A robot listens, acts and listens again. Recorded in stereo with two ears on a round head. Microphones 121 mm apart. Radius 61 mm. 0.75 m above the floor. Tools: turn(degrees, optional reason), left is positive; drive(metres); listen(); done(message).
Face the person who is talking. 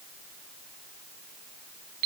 listen()
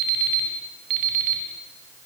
listen()
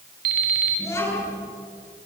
turn(degrees=25, reason="The child speaking: about 25° left or 155° left.")
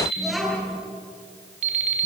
done("Facing the child speaking, over 4 m away.")